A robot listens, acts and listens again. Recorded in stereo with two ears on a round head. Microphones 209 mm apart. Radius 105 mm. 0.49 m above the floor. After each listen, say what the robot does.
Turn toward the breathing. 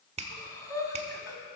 Turn 15° left.
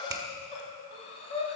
Turn 150° left.
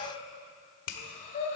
Turn 30° left.
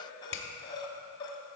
Turn 20° left.
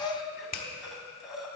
Found it: breathing, straight ahead, 1 to 2 m away.